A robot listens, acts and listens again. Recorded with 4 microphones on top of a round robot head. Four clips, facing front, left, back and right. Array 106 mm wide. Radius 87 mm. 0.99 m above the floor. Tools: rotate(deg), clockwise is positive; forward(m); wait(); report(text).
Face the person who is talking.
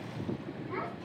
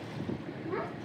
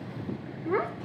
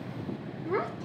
rotate(165)
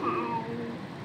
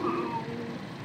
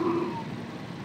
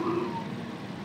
wait()
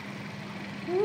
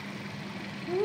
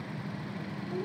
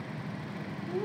rotate(-10)
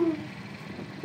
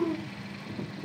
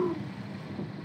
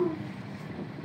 rotate(-10)
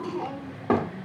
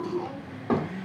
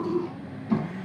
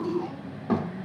report("Found it: a child speaking, straight ahead, 2 to 4 m away.")